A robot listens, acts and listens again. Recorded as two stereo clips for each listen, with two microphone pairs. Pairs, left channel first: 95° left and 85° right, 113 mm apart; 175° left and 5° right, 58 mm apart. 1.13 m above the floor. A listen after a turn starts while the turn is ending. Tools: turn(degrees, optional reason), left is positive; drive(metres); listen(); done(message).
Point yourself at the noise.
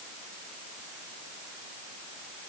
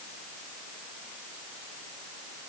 listen()
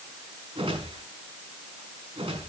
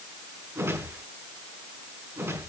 turn(degrees=-45, reason="The whoosh: 45° right.")
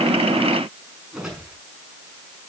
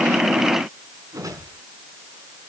done("Facing the whoosh, over 4 m away.")